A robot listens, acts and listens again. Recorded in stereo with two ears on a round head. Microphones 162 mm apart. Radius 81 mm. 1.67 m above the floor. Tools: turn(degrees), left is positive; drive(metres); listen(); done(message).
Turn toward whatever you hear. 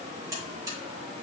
turn(degrees=-20)
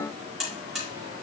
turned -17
done("Facing the buzzer, over 4 m away.")